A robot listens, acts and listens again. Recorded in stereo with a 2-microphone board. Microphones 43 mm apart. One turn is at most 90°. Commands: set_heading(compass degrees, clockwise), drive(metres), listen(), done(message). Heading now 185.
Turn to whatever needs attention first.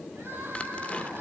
set_heading(275)
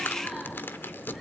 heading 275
listen()
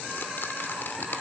listen()
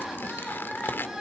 done("Facing the crying, over 4 m away.")